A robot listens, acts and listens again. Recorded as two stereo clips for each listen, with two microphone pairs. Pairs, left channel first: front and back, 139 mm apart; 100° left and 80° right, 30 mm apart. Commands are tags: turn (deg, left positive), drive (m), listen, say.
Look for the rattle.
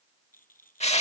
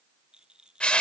<turn deg="-15"/>
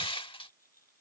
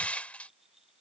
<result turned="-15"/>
<say>Found it: a rattle, straight ahead.</say>